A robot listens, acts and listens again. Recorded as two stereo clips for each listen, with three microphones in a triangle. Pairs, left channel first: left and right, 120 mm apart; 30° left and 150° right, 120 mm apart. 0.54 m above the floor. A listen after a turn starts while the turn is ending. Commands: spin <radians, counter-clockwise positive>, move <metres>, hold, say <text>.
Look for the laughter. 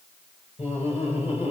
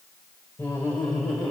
spin 2.01
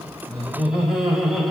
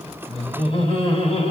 say Facing the laughter.